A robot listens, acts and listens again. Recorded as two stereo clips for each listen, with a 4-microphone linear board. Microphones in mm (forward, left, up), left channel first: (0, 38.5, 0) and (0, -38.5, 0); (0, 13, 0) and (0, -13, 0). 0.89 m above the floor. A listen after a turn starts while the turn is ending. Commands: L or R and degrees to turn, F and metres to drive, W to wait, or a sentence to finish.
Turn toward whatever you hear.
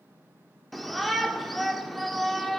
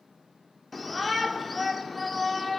L30
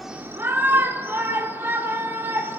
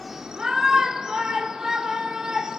R30
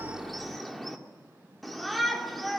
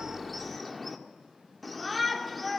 Found it: a shout, straight ahead, 1 to 2 m away.